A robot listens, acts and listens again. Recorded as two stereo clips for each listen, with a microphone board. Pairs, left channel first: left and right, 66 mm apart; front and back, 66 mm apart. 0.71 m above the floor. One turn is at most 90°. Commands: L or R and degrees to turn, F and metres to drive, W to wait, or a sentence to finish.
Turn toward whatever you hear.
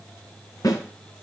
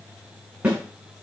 L90
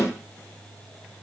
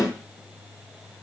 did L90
L30
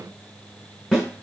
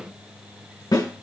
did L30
L10
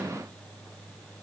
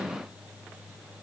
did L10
W
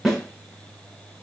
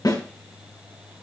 Facing the snare drum, over 4 m away.